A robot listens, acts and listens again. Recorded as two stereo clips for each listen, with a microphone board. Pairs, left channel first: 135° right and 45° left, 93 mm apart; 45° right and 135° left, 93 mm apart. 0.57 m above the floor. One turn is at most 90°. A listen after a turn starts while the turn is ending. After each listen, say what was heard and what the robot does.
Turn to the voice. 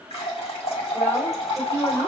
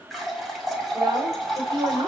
The woman speaking: 165° left. Turn 90° left.
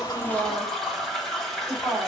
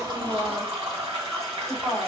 The woman speaking is now 75° left. Turn 75° left.
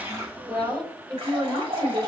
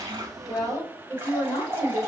Found it: a woman speaking, straight ahead, 2 to 4 m away.